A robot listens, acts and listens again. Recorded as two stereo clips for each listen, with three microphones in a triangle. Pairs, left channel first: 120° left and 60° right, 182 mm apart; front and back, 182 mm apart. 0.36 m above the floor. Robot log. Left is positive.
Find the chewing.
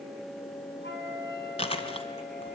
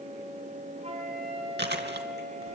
note: The chewing: straight behind.
cmd yaw +180
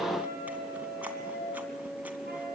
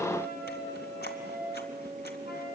cmd idle
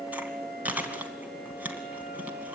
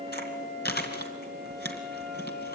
note: The chewing is now 20° left.
cmd yaw +20
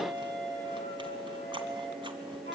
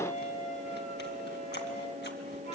cmd idle
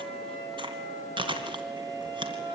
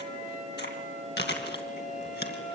end: Found it: chewing, straight ahead, 2 to 4 m away.